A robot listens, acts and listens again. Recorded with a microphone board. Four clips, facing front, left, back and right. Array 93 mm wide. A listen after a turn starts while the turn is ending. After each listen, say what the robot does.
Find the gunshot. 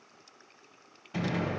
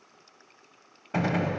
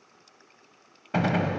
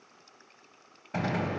Turn 160° left.
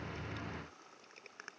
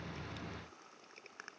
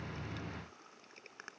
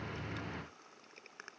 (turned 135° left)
Turn 25° left.
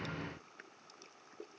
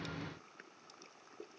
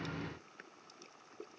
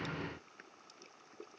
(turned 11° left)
Turn 15° left.
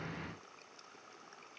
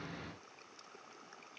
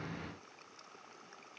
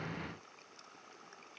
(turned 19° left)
Facing where the gunshot came from. I can't hear it now.